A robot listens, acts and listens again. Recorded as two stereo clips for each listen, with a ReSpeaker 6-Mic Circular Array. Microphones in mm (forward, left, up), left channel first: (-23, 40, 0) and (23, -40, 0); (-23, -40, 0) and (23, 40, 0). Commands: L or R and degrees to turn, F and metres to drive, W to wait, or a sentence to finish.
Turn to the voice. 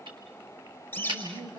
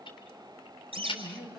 R30
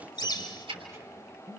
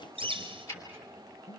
Found it: a man speaking, straight ahead, over 4 m away.